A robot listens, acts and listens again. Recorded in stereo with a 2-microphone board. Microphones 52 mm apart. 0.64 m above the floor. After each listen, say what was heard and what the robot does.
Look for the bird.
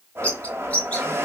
The bird: about 25° left or 155° left. Turn 25° left.
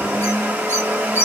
So it is at 135° left. Turn 135° left.
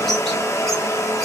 Keep listening.
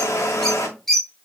Facing the bird.